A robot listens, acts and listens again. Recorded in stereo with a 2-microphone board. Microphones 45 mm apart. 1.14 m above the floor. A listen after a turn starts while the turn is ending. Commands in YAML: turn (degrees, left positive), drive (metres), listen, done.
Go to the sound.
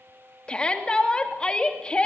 turn: 25
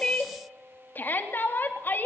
turn: 130
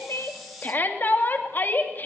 turn: 45
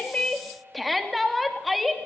drive: 1.0
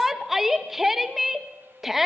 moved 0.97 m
drive: 1.0
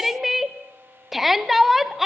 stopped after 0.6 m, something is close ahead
done: "Arrived at the shout, straight ahead."